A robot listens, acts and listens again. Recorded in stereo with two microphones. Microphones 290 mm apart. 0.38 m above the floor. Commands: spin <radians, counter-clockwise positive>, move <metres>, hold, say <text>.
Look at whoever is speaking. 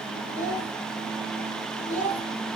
spin -0.52
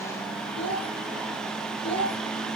spin 0.35
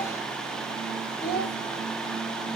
say Facing the child speaking, 2 to 4 m away.